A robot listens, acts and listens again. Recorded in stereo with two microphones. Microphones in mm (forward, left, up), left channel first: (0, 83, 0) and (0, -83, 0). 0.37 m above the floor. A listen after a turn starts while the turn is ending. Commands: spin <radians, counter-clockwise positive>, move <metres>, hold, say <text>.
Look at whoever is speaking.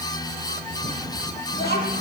spin 1.57
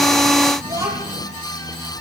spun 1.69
spin -0.35
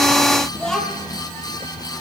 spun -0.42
say Found it: a child speaking, straight ahead.